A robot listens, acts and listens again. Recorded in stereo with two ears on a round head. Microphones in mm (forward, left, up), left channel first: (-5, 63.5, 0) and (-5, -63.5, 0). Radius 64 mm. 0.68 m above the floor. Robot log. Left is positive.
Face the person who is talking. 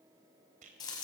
cmd idle
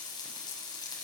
cmd idle
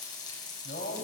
note: The man speaking: about 60° left or 120° left.
cmd yaw +60
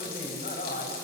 note: So it is at 60° left.
cmd yaw +60
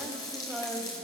end: Found it: a man speaking, straight ahead.